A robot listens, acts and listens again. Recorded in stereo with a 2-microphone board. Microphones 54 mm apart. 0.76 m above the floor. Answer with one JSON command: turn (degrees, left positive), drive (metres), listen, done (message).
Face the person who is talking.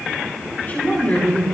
{"turn": 35}
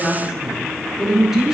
{"done": "Found it: a woman speaking, straight ahead."}